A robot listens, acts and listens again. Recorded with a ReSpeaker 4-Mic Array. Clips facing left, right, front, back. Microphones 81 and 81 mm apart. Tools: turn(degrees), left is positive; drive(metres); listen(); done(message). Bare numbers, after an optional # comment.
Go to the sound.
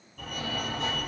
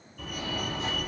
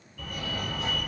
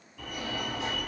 # The fire alarm: 110° left.
turn(110)
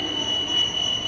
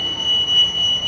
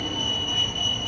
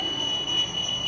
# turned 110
# The fire alarm is now 10° right.
turn(-10)
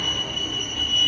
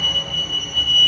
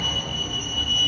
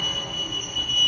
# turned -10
drive(1.0)
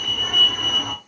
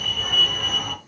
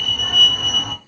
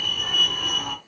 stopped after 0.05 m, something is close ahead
done("Something is in my way. I am facing the fire alarm but have not reached it.")